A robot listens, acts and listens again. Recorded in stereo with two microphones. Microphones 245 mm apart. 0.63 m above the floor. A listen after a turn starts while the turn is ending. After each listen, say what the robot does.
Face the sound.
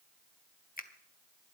Turn 35° left.
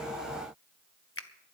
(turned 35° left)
Turn 105° left.
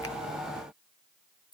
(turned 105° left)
Turn 20° left.
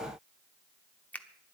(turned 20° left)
Facing the finger snap.